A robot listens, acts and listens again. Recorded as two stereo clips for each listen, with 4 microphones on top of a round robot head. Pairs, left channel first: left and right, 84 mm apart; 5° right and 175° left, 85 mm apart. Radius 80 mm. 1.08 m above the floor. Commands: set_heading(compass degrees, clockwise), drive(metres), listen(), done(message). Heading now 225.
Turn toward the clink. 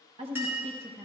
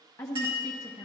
set_heading(20)
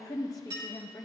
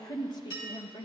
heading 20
set_heading(70)
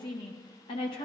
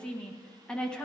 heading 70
listen()
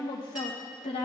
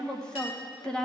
listen()
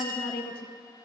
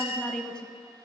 done("Found it: a clink, straight ahead, 2 to 4 m away.")